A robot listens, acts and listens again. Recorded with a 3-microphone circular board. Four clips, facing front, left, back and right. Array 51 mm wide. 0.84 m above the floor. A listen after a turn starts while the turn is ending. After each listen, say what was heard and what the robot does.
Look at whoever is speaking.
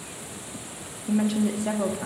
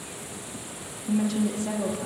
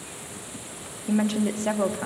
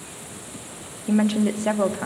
The woman speaking: 105° right. Turn 105° right.
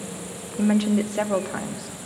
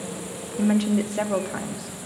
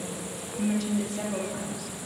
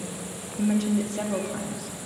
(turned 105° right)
The woman speaking is now 30° left. Turn 30° left.
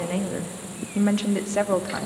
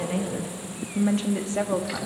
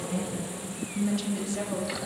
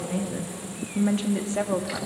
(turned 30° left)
Facing the woman speaking.